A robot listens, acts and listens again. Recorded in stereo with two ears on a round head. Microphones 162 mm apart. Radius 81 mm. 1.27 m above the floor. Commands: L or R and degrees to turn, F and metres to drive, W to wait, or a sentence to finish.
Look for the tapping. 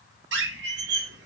W
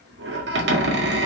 W
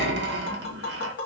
L60
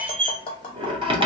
L30
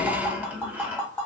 L10
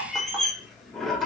W
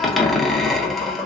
W
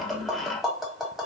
Facing the tapping, 1 to 2 m away.